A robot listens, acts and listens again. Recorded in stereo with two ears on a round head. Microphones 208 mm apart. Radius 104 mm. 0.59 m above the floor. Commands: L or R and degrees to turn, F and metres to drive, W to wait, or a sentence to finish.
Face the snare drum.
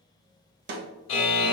R50
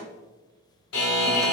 W
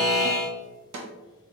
R85
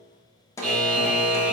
L15
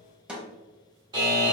Facing the snare drum, under 1 m away.